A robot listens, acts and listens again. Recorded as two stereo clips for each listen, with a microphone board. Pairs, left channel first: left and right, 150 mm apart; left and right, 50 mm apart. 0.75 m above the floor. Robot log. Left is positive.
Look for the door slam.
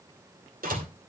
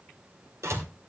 note: The door slam: about 70° right or 110° right.
cmd yaw -70
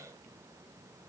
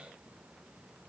cmd idle
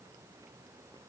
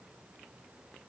end: I heard a door slam, but can't make it out now. It was about straight ahead or 40° right.